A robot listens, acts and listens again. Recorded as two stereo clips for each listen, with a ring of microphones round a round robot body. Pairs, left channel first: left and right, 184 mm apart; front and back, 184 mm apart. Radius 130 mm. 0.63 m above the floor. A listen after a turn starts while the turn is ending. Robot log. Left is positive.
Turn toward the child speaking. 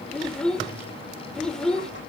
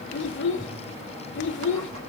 end: Found it: a child speaking, straight ahead, 1 to 2 m away.